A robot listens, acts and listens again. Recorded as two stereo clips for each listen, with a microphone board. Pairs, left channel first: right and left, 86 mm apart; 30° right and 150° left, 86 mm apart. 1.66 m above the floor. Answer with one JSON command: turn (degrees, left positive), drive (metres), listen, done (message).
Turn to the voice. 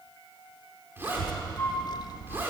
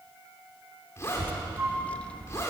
{"turn": -110}
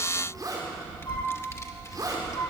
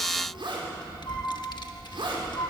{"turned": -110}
{"turn": -50}
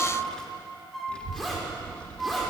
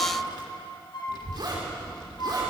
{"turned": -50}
{"turn": -15}
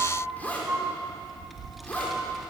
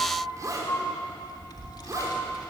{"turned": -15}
{"done": "Found it: a child speaking, straight ahead."}